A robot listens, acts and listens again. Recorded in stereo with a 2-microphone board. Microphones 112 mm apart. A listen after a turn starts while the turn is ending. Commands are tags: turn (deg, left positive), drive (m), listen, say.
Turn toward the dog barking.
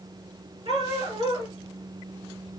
<turn deg="-60"/>
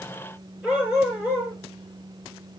<turn deg="-15"/>
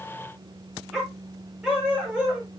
<turn deg="-10"/>
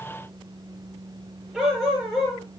<say>Found it: a dog barking, straight ahead, over 4 m away.</say>